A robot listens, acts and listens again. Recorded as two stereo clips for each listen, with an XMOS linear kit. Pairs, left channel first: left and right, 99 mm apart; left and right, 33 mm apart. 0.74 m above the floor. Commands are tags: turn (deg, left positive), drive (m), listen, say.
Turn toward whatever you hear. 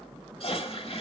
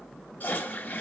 <turn deg="75"/>
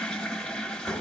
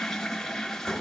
<say>Found it: a toilet flushing, straight ahead.</say>